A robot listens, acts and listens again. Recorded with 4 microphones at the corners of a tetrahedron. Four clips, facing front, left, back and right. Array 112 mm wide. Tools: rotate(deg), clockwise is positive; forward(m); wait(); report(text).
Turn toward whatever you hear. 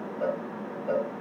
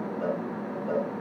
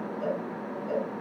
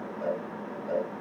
rotate(-25)
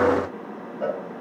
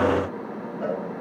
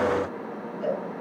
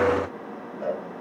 rotate(-15)
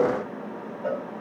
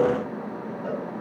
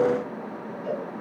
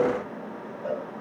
report("Found it: a cowbell, straight ahead.")